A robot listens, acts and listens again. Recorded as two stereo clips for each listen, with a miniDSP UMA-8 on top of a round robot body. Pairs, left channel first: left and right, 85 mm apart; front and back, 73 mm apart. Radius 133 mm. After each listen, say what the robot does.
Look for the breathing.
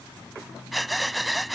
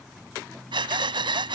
Turn 180° left.
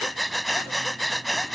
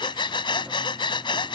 Facing the breathing.